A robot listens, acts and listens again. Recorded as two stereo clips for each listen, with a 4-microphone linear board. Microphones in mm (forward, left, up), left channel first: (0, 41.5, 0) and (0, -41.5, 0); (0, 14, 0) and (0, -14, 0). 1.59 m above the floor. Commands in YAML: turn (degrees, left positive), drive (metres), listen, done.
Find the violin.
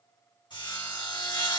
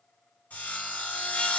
listen: true
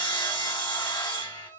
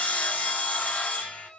turn: 50
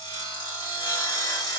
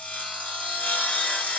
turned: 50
listen: true
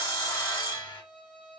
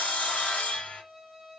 turn: 15
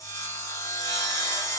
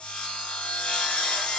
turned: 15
listen: true
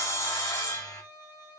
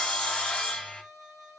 done: "Found it: a violin, straight ahead, 2 to 4 m away."